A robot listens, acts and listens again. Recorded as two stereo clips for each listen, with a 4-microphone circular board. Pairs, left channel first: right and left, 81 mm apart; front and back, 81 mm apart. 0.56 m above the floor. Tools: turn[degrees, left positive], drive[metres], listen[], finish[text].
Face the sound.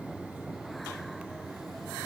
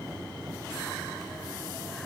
Action: listen[]
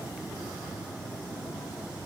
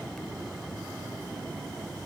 Action: listen[]
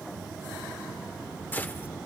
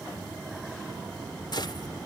Thought: The gunshot: 25° right.
Action: turn[-25]
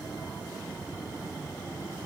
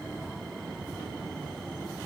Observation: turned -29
Action: finish[Facing where the gunshot came from. I can't hear it now.]